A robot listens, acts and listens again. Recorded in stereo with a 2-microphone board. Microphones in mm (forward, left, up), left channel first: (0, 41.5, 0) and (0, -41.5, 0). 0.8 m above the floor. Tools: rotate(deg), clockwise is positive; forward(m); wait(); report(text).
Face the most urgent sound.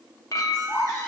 rotate(-40)
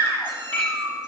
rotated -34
rotate(-110)
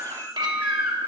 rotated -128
rotate(20)
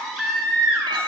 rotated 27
report("Facing the baby crying.")